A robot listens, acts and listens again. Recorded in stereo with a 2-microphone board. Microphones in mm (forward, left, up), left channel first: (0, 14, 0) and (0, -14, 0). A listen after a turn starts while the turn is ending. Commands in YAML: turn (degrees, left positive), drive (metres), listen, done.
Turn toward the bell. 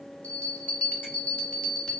turn: 50
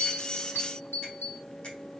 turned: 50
turn: 80
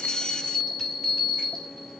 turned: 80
done: "Found it: a bell, straight ahead, 1 to 2 m away."